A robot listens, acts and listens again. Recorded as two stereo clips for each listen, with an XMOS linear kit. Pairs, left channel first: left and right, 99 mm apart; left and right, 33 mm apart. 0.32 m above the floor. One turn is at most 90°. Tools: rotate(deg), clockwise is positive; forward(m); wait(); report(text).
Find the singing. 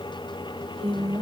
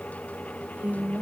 rotate(90)
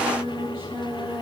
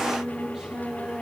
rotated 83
rotate(25)
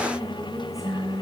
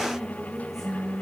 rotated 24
report("Found it: singing, straight ahead.")